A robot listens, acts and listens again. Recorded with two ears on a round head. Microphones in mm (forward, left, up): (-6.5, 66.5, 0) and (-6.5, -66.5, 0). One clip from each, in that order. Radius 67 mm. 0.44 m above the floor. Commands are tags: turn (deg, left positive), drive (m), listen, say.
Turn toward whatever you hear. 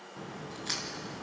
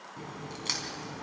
<turn deg="-50"/>
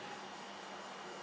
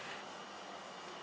<listen/>
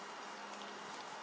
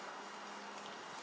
<say>I heard a crack, but can't make it out now. It was about straight ahead or 80° right.</say>